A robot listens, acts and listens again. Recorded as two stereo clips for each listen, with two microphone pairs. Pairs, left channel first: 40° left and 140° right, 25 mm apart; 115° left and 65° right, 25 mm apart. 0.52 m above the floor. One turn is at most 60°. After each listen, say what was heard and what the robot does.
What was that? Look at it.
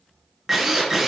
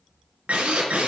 The drill: 55° right. Turn 55° right.
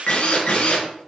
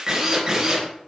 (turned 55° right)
Facing the drill.